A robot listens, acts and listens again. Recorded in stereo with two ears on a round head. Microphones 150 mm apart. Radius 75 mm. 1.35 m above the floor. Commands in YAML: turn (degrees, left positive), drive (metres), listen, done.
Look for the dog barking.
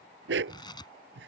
turn: -90
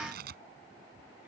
listen: true
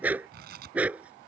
turn: -10
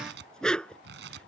done: "Found it: a dog barking, straight ahead."